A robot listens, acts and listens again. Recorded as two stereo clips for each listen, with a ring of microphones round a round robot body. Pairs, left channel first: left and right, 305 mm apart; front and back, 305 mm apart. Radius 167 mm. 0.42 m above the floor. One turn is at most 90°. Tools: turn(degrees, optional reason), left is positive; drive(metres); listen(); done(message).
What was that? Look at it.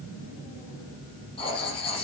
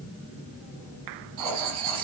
turn(degrees=90, reason="The writing: 165° left.")
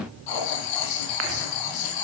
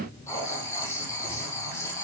turn(degrees=85, reason="The writing is now 85° left.")
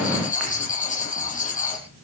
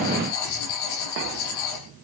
turn(degrees=25, reason="The writing is now 25° left.")
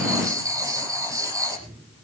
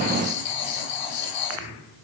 turn(degrees=-10, reason="The writing is now 10° right.")
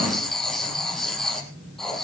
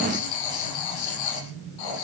done("Facing the writing, over 4 m away.")